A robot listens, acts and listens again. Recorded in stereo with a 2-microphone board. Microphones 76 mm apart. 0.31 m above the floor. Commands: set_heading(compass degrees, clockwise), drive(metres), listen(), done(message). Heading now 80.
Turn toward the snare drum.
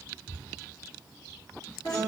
listen()
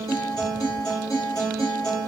listen()
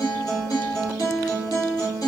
done("I can't make out a snare drum, only a guitar.")